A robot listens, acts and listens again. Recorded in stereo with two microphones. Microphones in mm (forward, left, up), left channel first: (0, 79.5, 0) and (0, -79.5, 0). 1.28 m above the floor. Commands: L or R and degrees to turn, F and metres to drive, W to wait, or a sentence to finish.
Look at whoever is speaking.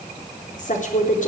L50
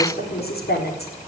L80
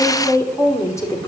L20
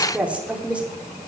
R10
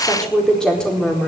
Facing the woman speaking.